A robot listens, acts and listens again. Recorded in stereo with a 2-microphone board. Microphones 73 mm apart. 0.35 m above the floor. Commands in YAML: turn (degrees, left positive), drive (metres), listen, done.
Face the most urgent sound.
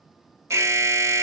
turn: -40
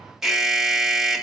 done: "Facing the alarm, 1 to 2 m away."